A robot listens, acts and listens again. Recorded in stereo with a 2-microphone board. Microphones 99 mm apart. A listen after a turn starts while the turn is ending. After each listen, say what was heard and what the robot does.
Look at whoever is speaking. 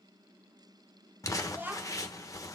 The child speaking: about 20° right or 160° right. Turn 20° right.
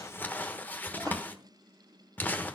Keep listening.
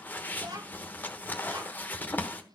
So it is at 140° right. Turn 140° right.
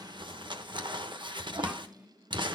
The child speaking is now 15° right. Turn 15° right.
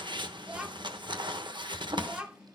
The child speaking is now 10° right. Turn 10° right.
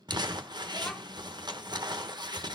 Keep listening.
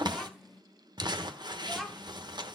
Found it: a child speaking, straight ahead.